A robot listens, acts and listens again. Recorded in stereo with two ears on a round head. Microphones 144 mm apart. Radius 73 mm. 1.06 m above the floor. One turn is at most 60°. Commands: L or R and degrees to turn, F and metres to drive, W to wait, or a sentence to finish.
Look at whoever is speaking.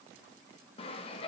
W
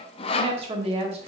R40
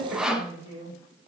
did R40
R60
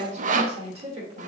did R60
R35
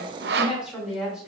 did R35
Found it: a woman speaking, straight ahead.